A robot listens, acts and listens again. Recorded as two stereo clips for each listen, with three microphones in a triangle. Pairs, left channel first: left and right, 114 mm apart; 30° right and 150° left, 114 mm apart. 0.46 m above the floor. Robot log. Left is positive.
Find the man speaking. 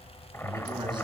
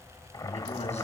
note: The man speaking: 40° right.
cmd yaw -40
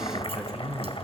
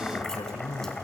note: The man speaking is now 10° right.
cmd yaw -10
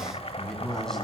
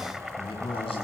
end: Facing the man speaking.